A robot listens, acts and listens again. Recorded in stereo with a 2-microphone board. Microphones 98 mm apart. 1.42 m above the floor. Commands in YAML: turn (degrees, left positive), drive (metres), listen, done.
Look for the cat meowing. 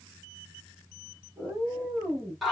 turn: -15
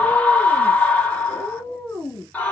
turn: 20
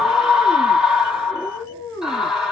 turn: 25
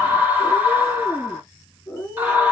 turn: 15
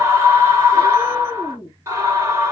done: "Found it: a cat meowing, straight ahead, 2 to 4 m away."